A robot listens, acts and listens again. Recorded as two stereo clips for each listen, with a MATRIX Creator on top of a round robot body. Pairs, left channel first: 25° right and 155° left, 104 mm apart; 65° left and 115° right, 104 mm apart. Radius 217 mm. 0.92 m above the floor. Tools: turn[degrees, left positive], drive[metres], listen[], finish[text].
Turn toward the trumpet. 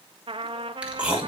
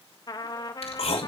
Thought: The trumpet: 120° left.
Action: turn[120]
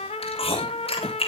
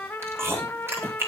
Action: finish[Facing the trumpet, 1 to 2 m away.]